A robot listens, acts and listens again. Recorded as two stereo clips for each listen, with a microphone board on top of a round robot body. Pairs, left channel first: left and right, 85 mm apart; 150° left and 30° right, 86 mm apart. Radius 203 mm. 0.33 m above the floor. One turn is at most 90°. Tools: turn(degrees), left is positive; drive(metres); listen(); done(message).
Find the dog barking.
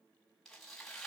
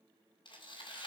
listen()
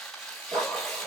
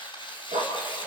turn(degrees=-35)
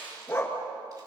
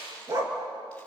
turn(degrees=20)
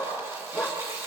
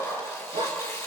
done("Facing the dog barking, 2 to 4 m away.")